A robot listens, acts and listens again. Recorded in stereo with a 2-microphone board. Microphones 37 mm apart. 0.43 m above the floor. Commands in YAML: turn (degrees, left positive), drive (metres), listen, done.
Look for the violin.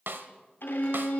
turn: 90
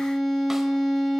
done: "Found it: a violin, straight ahead, 2 to 4 m away."